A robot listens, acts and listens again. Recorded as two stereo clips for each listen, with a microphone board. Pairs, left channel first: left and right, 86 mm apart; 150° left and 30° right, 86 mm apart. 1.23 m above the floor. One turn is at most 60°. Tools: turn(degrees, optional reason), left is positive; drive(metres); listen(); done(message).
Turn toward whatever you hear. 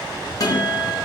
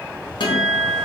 turn(degrees=60, reason="The guitar: 135° left.")
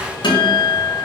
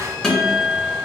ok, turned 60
turn(degrees=60, reason="The guitar is now 70° left.")
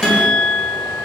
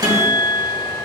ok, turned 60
turn(degrees=10, reason="The guitar is now 10° left.")
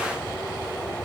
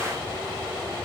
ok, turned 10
listen()
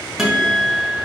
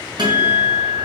done("Facing the guitar, 1 to 2 m away.")